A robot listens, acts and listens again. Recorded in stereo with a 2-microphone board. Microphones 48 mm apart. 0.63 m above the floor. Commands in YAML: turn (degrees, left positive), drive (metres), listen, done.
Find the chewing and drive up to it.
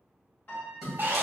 turn: 30
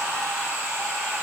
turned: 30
listen: true
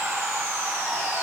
listen: true
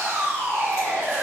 done: "I heard chewing, but can't make it out now. It was about 25° right or 145° left. I did not reach it."